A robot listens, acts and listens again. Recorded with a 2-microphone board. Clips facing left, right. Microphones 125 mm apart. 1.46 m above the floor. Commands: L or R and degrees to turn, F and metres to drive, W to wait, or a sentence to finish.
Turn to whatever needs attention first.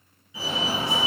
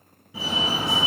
R60
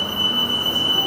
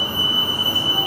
R15
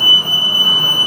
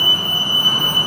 Facing the fire alarm, 1 to 2 m away.